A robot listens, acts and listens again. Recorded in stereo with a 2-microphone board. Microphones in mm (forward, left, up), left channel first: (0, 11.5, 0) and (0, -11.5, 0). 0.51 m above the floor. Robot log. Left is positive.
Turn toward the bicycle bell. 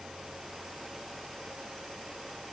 cmd idle
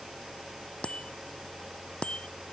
note: The bicycle bell: about 50° left or 130° left.
cmd yaw +50
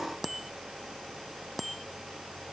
end: Found it: a bicycle bell, straight ahead.